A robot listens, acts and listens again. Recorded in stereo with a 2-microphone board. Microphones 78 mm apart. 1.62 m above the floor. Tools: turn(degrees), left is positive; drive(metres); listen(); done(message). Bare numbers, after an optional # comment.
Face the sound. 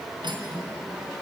# The cutlery clinking: about 70° right or 110° right.
turn(-70)
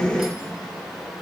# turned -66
listen()
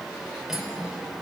done("Found it: cutlery clinking, straight ahead, 2 to 4 m away.")